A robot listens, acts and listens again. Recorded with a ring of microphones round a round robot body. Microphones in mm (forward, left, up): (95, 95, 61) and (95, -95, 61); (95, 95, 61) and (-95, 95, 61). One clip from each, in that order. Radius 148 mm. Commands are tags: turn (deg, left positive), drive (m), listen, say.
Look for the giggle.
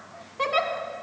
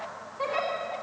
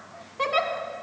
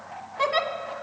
<turn deg="120"/>
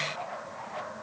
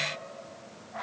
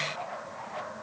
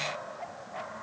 <listen/>
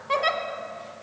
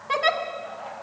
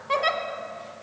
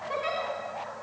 <turn deg="-10"/>
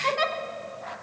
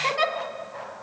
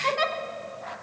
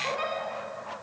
<say>Found it: a giggle, straight ahead, 1 to 2 m away.</say>